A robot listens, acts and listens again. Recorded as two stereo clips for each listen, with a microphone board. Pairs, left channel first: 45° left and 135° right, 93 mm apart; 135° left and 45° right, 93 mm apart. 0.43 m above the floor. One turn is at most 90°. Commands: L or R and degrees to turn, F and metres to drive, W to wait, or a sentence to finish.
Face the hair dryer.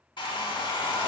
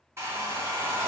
L15
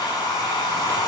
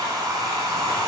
Facing the hair dryer, under 1 m away.